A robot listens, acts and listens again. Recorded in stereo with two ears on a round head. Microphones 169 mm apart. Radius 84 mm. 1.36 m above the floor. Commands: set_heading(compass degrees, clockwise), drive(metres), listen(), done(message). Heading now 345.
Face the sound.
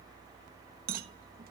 set_heading(35)
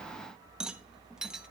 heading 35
done("Found it: a rattle, straight ahead.")